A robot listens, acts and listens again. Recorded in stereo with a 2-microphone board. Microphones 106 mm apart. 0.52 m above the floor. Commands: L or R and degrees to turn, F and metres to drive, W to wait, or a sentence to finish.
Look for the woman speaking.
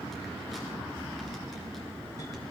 W
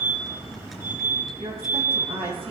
R65
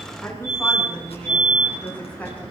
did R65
L15
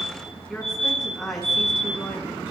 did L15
Found it: a woman speaking, straight ahead.